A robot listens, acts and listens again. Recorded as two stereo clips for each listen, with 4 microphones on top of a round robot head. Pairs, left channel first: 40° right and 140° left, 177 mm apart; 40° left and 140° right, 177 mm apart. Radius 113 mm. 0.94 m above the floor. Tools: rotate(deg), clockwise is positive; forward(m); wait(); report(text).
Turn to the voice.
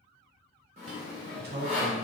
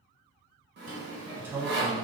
rotate(-145)
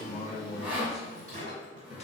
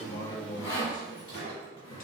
report("Found it: a man speaking, straight ahead, under 1 m away.")